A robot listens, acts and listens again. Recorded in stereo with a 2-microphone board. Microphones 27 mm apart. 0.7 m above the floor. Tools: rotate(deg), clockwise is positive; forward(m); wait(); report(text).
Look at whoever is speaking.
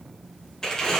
wait()
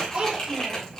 rotate(40)
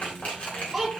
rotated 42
report("Found it: a child speaking, straight ahead.")